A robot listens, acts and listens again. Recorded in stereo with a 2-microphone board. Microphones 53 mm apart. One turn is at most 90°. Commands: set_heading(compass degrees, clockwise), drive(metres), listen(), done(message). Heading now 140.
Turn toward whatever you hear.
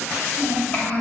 set_heading(110)
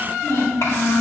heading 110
set_heading(20)
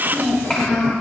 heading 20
set_heading(10)
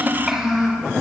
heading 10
set_heading(20)
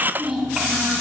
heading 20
set_heading(35)
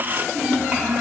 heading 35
set_heading(50)
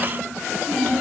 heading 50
done("Found it: a child speaking, straight ahead, 2 to 4 m away.")